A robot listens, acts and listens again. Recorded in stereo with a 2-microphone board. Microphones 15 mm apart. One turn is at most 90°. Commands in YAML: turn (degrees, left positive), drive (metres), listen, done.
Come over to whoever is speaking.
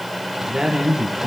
turn: -65
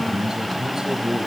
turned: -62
turn: -55
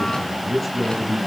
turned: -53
drive: 1.0
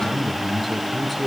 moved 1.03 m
drive: 1.0
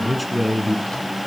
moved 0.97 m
drive: 1.0
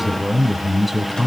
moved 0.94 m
turn: -10
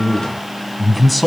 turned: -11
drive: 1.0
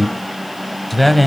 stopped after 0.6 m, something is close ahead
done: "I am next to the man speaking."